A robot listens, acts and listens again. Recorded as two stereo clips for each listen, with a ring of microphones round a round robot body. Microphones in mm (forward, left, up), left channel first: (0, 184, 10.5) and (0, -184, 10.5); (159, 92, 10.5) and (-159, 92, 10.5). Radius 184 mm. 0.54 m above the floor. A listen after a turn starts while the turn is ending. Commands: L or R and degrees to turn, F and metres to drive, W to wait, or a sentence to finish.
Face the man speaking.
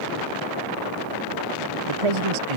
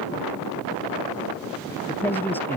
R85
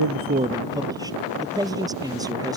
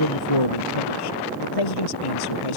R10
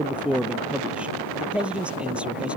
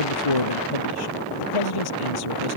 Found it: a man speaking, straight ahead.